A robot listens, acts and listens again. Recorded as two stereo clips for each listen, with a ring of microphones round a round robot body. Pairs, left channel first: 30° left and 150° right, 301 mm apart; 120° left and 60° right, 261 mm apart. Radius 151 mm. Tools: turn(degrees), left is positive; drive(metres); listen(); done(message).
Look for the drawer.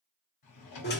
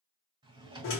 turn(degrees=15)
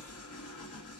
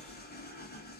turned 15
listen()
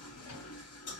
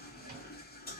listen()
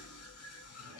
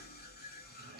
done("Found it: a drawer, straight ahead.")